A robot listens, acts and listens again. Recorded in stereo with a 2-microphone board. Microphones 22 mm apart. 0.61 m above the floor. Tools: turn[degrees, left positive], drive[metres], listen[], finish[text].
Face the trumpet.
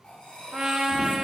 Thought: The trumpet: about 55° right or 125° right.
Action: turn[-55]
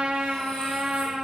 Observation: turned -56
Thought: So it is at 70° right.
Action: turn[-70]
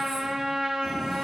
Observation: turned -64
Action: finish[Found it: a trumpet, straight ahead, 1 to 2 m away.]